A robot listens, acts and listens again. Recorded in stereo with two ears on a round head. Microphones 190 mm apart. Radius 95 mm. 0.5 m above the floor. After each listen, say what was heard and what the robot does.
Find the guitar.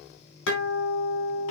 The guitar: about 65° left or 115° left. Turn 65° left.
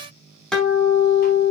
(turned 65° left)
Facing the guitar, over 4 m away.